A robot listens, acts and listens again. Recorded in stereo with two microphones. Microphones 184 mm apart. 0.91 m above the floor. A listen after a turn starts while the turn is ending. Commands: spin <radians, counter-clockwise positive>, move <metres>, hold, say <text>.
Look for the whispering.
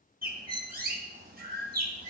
hold
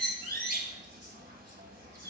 hold
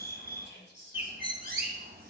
spin 1.22
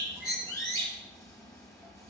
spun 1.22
hold
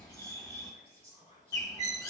spin 0.52
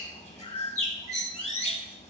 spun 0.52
hold
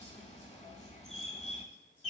hold
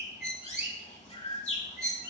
say I heard whispering from this way, but can't make it out now.